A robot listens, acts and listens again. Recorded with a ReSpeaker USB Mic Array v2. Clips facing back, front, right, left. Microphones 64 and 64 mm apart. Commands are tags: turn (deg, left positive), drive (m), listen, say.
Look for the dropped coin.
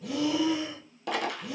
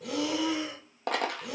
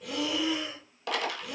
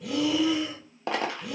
<turn deg="35"/>
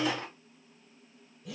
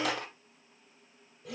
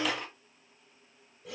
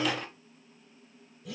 <say>Found it: a dropped coin, straight ahead.</say>